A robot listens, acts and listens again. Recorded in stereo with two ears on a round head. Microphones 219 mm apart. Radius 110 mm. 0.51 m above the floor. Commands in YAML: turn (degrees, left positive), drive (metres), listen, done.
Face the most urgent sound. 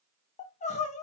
turn: 30
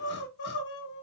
turn: 115
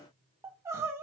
turn: -15
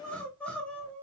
done: "Found it: crying, straight ahead."